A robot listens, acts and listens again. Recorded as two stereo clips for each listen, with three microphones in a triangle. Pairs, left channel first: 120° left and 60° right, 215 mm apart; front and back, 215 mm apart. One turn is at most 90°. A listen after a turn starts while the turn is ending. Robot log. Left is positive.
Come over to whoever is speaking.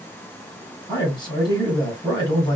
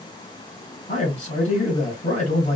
note: The man speaking: 50° left.
cmd yaw +50
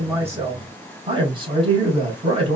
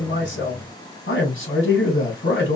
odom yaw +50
cmd fwd 1.0
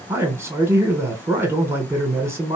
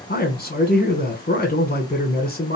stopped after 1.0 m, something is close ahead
note: The man speaking is now 15° left.
cmd yaw +15
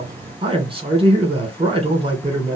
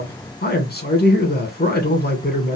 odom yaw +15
end: Arrived at the man speaking, straight ahead.